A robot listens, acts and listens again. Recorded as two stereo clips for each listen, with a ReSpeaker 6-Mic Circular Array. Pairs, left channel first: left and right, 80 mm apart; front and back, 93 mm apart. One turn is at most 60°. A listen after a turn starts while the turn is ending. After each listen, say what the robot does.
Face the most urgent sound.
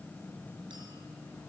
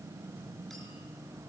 Keep listening.
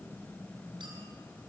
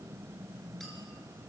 Keep listening.
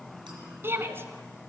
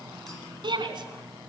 Turn 60° right.
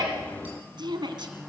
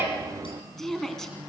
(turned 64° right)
Turn 60° right.
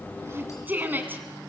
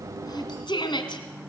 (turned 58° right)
Turn 25° right.
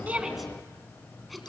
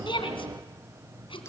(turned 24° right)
Keep listening.
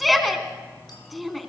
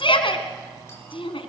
Facing the shout, 2 to 4 m away.